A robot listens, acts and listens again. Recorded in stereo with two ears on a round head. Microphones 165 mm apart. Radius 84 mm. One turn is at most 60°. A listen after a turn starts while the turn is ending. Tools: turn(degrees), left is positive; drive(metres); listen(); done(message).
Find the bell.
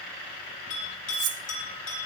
turn(degrees=60)
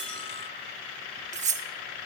listen()
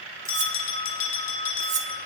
turn(degrees=50)
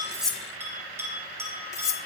turn(degrees=-15)
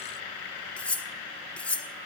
listen()
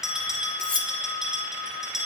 done("Found it: a bell, straight ahead.")